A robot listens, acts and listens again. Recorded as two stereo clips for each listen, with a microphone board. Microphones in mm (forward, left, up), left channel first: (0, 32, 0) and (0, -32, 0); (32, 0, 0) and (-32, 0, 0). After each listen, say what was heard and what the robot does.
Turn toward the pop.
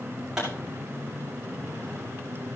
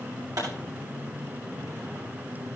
The pop: 170° right. Turn 170° right.
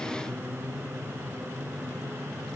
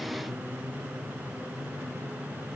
Facing where the pop came from. I can't hear it now.